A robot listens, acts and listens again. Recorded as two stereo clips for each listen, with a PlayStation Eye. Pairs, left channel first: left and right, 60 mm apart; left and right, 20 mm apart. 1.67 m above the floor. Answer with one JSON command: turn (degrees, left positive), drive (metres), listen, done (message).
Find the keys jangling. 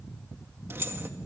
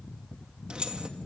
{"turn": -40}
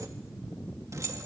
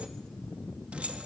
{"turn": -120}
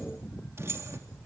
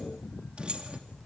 {"turn": -50}
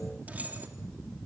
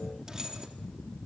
{"turn": -30}
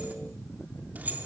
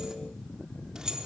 {"turn": -30}
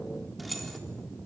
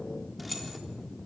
{"done": "Found it: keys jangling, straight ahead, 2 to 4 m away."}